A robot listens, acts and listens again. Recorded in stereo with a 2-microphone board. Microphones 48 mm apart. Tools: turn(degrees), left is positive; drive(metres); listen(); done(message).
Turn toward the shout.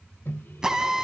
listen()
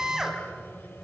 listen()
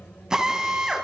done("I can't make out a shout to turn to.")